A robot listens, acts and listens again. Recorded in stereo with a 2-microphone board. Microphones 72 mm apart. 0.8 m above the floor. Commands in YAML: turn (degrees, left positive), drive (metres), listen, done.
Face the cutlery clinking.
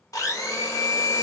listen: true
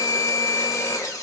listen: true
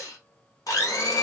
done: "I can't make out cutlery clinking, only a blender."